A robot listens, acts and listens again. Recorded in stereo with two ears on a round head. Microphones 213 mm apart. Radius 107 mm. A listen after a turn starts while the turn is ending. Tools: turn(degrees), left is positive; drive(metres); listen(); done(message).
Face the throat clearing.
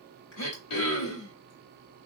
turn(degrees=90)
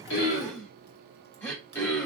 turn(degrees=10)
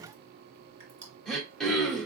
done("Facing the throat clearing, 1 to 2 m away.")